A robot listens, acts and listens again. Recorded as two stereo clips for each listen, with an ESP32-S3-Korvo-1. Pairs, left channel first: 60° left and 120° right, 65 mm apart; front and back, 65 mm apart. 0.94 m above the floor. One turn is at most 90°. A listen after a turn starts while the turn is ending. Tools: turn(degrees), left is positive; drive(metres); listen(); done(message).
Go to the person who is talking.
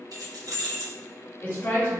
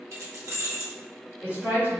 turn(degrees=90)
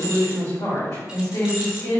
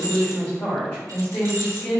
turn(degrees=55)
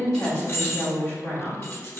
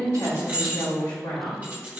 drive(metres=1.0)
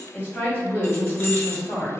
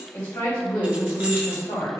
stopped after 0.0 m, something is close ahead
done("Something is in my way. I am facing the woman speaking but have not reached it.")